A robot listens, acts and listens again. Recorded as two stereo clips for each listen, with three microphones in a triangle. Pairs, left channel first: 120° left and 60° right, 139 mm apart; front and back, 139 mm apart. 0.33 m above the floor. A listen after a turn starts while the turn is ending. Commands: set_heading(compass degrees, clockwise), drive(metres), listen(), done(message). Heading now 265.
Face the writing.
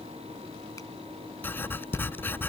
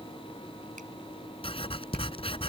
set_heading(220)
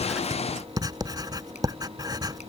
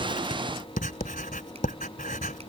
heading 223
done("Found it: writing, straight ahead.")